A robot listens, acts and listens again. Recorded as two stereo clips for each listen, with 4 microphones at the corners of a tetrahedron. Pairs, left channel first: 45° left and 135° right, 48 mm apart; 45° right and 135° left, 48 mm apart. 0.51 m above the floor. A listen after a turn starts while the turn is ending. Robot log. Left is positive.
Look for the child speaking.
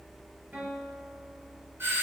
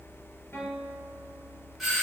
cmd idle
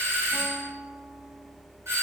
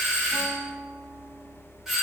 cmd idle
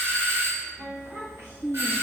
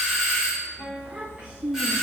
note: The child speaking: 155° right.
cmd yaw -155
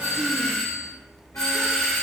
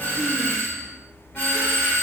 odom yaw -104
note: Nothing new. It was at 50° right.
cmd yaw -50
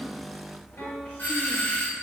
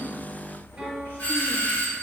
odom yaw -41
note: Nothing new. It was at 10° right.
cmd yaw -10
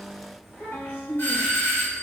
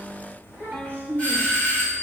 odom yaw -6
note: The child speaking is now 10° left.
cmd yaw +10
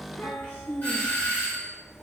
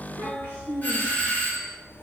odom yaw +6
end: Found it: a child speaking, straight ahead.